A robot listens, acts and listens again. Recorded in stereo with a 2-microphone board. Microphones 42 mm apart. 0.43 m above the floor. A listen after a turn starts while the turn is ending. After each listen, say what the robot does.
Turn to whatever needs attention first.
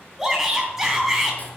Turn 30° right.
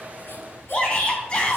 Turn 25° left.
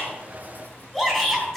Found it: a shout, straight ahead.